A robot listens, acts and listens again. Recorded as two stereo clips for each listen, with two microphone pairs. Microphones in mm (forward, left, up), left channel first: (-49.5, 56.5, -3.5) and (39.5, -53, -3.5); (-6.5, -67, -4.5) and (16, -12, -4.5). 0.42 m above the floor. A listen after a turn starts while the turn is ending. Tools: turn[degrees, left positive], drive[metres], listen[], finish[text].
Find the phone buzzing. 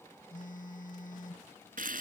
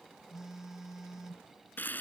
Thought: The phone buzzing: 150° left.
Action: turn[150]
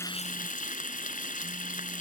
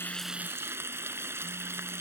Action: listen[]
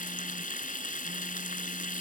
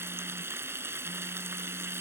Action: listen[]
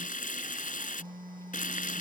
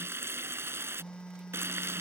Thought: The phone buzzing is now 40° right.
Action: turn[-40]
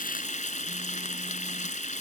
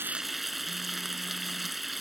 Action: listen[]
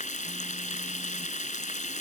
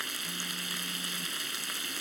Action: listen[]
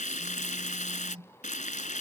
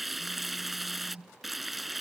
Action: finish[Found it: a phone buzzing, straight ahead.]